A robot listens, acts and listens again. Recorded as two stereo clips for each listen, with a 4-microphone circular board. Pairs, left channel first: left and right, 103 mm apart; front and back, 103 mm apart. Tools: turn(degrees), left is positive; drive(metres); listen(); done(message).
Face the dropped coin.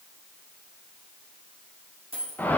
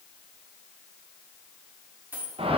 turn(degrees=-105)
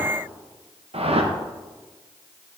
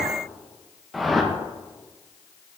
done("I heard a dropped coin from this way, but can't make it out now.")